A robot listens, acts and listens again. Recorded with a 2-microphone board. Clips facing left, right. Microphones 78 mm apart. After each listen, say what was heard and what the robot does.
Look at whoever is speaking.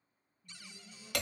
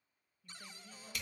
Turn 90° right.
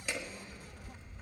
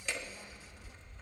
Keep listening.
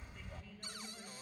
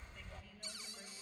Keep listening.
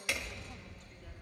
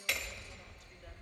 Facing where the woman speaking came from. I can't hear it now.